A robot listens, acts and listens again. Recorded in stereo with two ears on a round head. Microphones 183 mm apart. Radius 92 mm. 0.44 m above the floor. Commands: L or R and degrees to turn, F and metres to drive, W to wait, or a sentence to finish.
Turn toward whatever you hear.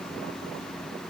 W
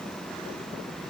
W
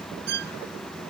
R55
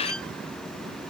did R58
W
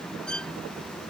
Found it: a violin, straight ahead.